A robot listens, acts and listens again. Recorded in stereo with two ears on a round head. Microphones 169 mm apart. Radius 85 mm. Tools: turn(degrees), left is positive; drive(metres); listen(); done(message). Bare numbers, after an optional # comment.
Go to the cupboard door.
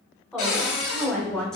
turn(90)
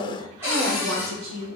# So it is at 15° right.
turn(-15)
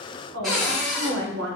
drive(1.0)
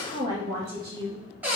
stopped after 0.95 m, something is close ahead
# The cupboard door is now 10° right.
turn(-10)
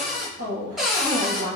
done("I am next to the cupboard door.")